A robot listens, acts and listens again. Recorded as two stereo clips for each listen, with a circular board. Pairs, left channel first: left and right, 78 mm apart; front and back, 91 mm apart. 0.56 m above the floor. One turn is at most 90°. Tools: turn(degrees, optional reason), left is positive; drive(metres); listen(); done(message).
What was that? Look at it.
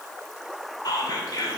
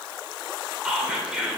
turn(degrees=90, reason="The whispering: 100° left.")
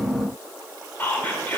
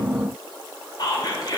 turn(degrees=25, reason="The whispering is now 25° left.")
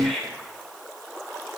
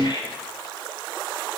done("Found it: whispering, straight ahead, 2 to 4 m away.")